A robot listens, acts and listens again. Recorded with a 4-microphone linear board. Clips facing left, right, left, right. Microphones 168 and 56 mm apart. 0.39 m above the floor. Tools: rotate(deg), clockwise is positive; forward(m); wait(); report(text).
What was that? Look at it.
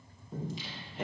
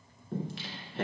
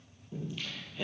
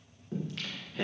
rotate(90)
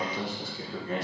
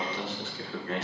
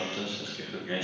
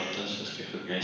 rotate(-15)
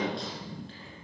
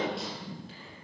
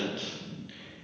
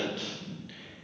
report("Facing the singing.")